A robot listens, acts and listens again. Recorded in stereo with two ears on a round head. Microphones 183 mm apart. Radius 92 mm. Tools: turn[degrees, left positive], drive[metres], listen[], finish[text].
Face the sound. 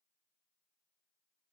Action: listen[]
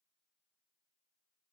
Action: listen[]
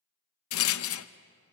Action: turn[90]
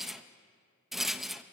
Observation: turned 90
Action: finish[Facing the rattle, under 1 m away.]